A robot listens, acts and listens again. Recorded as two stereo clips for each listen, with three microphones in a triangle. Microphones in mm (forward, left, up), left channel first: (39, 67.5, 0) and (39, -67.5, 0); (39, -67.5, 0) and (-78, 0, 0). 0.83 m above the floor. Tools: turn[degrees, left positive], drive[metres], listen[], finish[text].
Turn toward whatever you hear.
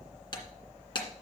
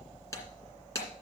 Thought: The breaking glass: 35° left.
Action: turn[35]
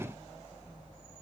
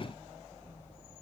Action: finish[I heard breaking glass from this way, but can't make it out now.]